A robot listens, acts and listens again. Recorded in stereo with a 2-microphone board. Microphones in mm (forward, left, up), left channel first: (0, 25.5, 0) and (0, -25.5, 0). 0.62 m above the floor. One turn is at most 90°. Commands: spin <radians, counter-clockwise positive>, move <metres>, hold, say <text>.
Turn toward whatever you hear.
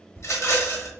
spin 1.13
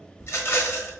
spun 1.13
spin 0.87
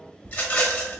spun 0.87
spin 0.52
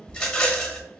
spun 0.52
spin 0.26
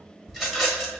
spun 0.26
say Found it: a rattle, straight ahead, 1 to 2 m away.